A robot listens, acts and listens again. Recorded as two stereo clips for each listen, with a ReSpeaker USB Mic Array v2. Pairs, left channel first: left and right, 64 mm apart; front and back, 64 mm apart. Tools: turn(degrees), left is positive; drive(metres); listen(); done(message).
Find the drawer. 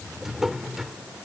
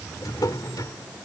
done("Facing the drawer.")